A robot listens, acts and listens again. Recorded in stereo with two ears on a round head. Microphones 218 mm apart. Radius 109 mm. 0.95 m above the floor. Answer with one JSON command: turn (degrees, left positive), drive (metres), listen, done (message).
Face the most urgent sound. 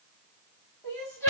{"turn": 30}
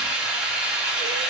{"listen": true}
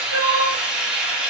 {"turn": -15}
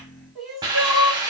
{"done": "Found it: crying, straight ahead, 1 to 2 m away."}